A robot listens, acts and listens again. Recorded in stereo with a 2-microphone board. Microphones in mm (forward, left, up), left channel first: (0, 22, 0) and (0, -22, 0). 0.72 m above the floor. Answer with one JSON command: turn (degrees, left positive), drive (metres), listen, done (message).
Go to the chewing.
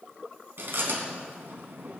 {"turn": -65}
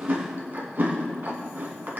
{"turn": -50}
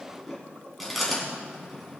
{"drive": 1.0}
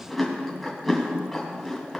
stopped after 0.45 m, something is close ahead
{"done": "Blocked. The chewing is further on, straight ahead."}